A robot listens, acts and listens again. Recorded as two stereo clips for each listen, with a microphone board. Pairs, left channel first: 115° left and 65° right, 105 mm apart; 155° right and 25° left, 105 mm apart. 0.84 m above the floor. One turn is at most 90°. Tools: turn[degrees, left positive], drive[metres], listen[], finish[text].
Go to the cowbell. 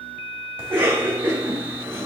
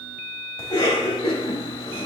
Action: listen[]
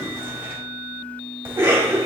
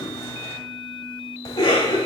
Action: listen[]
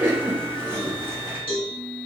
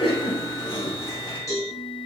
Thought: The cowbell: 145° left.
Action: turn[90]
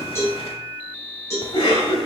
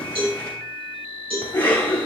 Thought: The cowbell is now 50° left.
Action: turn[50]
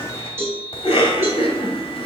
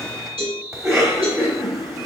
Action: drive[1.0]
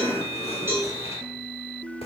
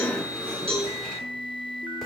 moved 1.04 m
Action: drive[1.0]
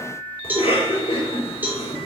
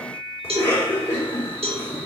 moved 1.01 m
Action: drive[1.0]
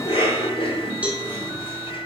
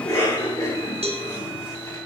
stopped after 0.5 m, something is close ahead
Thought: The cowbell is now 10° left.
Action: turn[10]
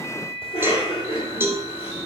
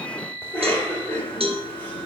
Action: finish[Arrived at the cowbell, straight ahead.]